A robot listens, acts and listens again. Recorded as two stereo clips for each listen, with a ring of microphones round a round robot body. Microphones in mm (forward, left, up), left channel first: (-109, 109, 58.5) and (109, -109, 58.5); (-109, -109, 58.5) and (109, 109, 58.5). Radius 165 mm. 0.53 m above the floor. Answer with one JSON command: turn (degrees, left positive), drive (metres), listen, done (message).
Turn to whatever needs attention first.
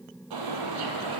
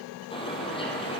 {"listen": true}
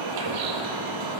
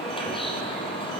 {"listen": true}
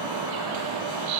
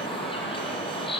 {"done": "I can't make out anything urgent to turn to."}